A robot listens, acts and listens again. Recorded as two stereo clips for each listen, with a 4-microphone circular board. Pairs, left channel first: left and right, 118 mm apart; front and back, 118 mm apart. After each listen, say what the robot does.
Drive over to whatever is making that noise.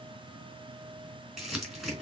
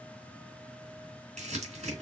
Turn 175° right.
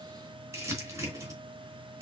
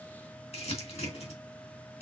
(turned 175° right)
Turn 25° right.
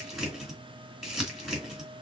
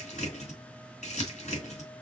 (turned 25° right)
Drive 1.0 m forward.
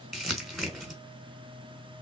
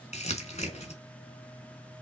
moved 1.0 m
Drive 1.0 m forward.
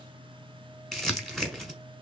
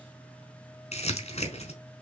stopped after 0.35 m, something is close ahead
Arrived at the crumpling, straight ahead.